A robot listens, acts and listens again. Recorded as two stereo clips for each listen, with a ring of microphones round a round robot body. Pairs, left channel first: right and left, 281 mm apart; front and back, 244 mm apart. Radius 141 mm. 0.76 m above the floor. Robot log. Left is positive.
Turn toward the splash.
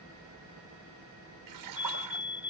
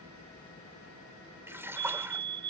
note: The splash: 100° left.
cmd yaw +100
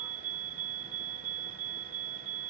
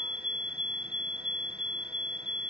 end: I heard a splash from this way, but can't make it out now.